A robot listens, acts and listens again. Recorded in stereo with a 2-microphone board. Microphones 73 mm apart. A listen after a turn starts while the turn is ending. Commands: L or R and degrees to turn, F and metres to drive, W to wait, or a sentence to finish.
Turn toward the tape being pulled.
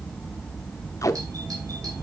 L45
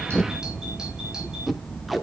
Found it: tape being pulled, straight ahead.